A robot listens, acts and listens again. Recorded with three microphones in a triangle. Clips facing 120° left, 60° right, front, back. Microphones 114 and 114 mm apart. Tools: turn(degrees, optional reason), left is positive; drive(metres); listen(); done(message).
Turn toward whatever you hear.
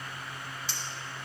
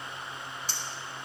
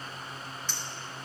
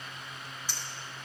turn(degrees=-100, reason="The clink: 100° right.")
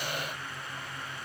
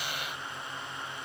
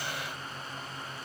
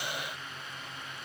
listen()
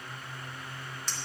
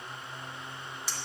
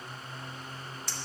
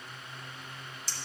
turn(degrees=20, reason="The clink is now 20° left.")
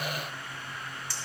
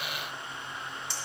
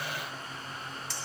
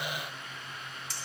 done("Found it: a clink, straight ahead, 1 to 2 m away.")